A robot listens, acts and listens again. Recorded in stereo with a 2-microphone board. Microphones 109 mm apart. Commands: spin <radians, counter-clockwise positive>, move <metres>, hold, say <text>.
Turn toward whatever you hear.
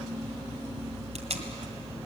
spin -1.57
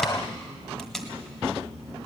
say Facing the tape being pulled.